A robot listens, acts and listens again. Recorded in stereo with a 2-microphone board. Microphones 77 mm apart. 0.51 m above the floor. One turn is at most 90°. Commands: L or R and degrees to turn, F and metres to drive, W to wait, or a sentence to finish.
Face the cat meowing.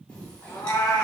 L55
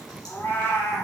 L40
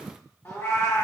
L45
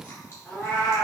L20
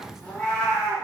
L10
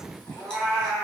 Found it: a cat meowing, straight ahead.